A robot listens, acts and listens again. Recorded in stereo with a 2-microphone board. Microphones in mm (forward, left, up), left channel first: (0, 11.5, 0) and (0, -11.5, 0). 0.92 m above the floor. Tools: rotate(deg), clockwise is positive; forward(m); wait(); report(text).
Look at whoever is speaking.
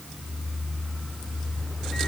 wait()
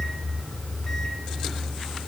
wait()
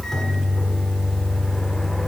report("I can't make out anyone speaking to turn to.")